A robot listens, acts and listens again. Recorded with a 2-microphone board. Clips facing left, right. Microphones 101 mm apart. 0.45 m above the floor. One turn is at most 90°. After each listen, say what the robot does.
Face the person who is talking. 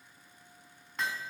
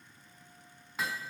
Keep listening.
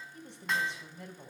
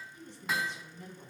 Turn 65° left.
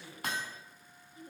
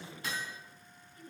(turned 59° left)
Turn 20° left.
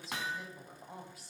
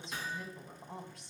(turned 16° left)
Facing the woman speaking, 2 to 4 m away.